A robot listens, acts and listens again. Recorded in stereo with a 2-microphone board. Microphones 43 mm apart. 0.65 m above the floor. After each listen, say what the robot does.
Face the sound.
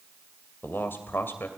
Turn 60° left.
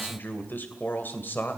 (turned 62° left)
Turn 55° left.
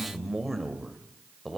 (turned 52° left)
Found it: a man speaking, straight ahead, 2 to 4 m away.